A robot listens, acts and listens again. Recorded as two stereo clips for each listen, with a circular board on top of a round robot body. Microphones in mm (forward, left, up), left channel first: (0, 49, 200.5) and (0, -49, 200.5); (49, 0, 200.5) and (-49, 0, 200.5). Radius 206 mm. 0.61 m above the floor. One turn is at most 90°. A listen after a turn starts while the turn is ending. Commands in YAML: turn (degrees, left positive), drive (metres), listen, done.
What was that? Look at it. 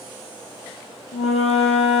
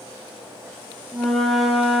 turn: 90
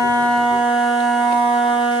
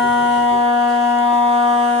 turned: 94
done: "Facing the flute."